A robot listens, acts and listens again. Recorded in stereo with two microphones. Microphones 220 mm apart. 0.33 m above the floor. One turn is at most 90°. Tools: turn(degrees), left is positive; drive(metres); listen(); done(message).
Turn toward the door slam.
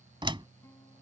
turn(degrees=-25)
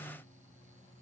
listen()
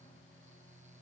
done("I heard a door slam, but can't make it out now. It was about straight ahead or 130° right.")